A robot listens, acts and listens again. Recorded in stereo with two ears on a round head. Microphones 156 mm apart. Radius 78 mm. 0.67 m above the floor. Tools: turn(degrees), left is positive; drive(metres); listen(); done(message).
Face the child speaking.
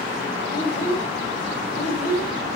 turn(degrees=60)
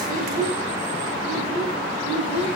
turn(degrees=40)
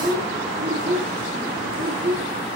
done("Facing the child speaking, 2 to 4 m away.")